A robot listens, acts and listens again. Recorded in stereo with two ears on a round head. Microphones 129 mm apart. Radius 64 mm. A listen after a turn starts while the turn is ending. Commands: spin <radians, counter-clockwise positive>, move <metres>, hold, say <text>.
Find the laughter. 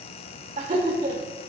spin -0.96
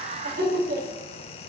spin -1.22
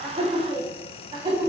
spin -0.70
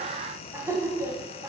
spin -0.44
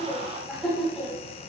say Facing the laughter, over 4 m away.